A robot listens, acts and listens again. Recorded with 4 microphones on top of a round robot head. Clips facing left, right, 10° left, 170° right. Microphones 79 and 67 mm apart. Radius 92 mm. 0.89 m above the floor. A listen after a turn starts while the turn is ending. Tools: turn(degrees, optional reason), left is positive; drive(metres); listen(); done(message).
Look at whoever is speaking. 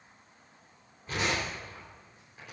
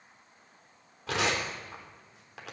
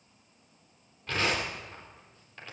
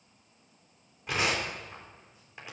listen()
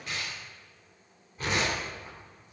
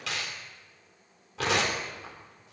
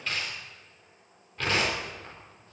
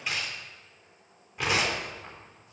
listen()
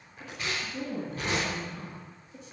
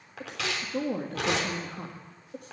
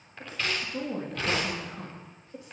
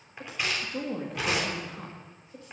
turn(degrees=-60, reason="The woman speaking: 60° right.")
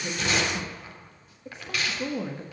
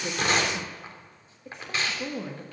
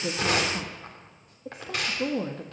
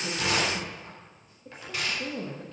done("Found it: a woman speaking, straight ahead.")